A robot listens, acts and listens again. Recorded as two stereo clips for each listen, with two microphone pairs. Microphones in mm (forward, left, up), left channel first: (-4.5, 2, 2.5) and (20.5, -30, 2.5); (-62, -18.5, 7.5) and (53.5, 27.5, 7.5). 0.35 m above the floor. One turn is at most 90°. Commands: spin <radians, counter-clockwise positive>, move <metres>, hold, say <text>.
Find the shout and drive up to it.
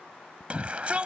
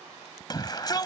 spin -1.57
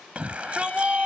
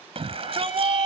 move 1.0
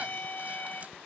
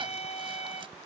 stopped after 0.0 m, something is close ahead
hold
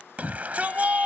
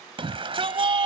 spin -0.17
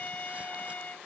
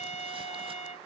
hold
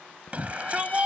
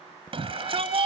say Blocked. The shout is further on, straight ahead.